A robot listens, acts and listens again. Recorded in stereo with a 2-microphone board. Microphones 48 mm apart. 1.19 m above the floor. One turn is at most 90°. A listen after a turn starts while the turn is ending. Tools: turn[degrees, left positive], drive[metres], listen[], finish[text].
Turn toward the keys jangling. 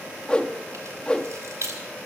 Action: turn[-90]
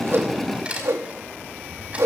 Thought: So it is at 25° right.
Action: turn[-25]
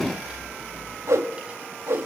Thought: The keys jangling is now 20° right.
Action: turn[-20]
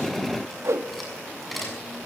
Action: finish[Found it: keys jangling, straight ahead.]